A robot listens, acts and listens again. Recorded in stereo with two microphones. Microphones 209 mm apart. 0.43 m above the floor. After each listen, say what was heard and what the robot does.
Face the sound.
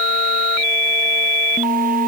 Keep listening.
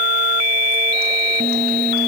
Keep listening.
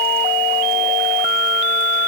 I can't make out anything to turn to.